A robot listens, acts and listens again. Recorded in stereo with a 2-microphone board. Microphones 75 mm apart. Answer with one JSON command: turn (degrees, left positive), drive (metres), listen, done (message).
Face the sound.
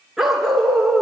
{"turn": 30}
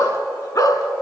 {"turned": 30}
{"turn": 130}
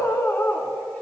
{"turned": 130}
{"turn": 25}
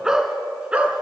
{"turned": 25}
{"turn": -15}
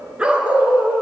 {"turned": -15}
{"turn": -15}
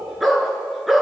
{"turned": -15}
{"done": "Found it: a dog barking, straight ahead."}